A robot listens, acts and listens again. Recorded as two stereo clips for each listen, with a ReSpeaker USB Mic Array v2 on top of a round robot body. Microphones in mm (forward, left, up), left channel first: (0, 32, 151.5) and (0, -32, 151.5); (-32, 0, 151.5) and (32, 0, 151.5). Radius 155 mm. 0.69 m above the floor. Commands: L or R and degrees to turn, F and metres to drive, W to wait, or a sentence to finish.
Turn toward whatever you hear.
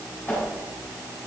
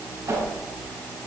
L30
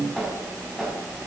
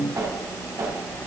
L10
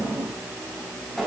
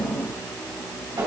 Found it: a whoosh, straight ahead, over 4 m away.